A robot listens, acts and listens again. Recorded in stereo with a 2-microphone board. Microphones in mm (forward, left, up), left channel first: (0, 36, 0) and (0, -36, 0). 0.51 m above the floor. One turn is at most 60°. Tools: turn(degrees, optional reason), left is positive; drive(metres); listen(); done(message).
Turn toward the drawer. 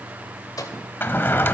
turn(degrees=30, reason="The drawer: about 30° left or 150° left.")
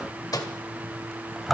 done("Found it: a drawer, straight ahead.")